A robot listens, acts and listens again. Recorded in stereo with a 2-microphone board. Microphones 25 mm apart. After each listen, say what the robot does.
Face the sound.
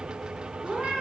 Turn 40° right.
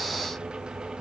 Keep listening.
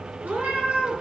Turn 100° right.
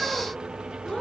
Turn 15° left.
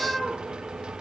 Facing the cat meowing.